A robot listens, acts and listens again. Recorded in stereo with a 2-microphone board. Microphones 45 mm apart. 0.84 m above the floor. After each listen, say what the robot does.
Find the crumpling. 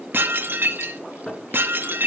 Keep listening.
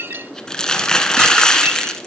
Turn 15° left.
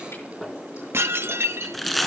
Facing the crumpling.